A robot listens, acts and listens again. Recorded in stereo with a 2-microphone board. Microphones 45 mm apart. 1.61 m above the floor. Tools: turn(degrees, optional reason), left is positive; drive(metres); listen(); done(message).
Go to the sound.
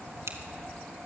turn(degrees=-90)
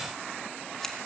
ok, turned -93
listen()
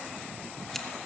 listen()
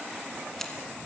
done("I heard scissors from this way, but can't make it out now. I did not reach it.")